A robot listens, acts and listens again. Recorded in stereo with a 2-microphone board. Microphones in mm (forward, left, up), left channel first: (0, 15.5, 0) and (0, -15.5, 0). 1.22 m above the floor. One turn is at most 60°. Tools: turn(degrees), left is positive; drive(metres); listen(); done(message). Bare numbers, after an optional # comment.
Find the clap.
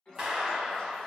# The clap: about 25° right or 155° right.
turn(-25)
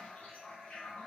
listen()
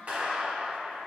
# So it is at 130° right.
turn(-60)
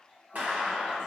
# The clap is now 65° right.
turn(-60)
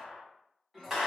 done("Facing the clap.")